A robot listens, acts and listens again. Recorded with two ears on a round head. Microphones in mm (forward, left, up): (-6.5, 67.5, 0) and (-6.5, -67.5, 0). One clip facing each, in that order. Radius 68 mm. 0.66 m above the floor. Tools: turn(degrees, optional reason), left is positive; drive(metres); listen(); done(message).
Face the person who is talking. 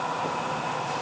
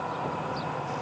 listen()
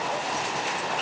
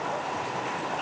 listen()
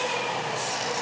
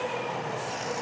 done("I can't make out anyone speaking.")